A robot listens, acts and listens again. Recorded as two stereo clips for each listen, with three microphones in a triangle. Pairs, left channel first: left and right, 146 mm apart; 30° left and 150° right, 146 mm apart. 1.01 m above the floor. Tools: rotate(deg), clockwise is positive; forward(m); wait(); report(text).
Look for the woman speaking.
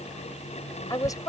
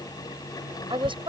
rotate(-155)
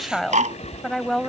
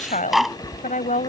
report("Found it: a woman speaking, straight ahead.")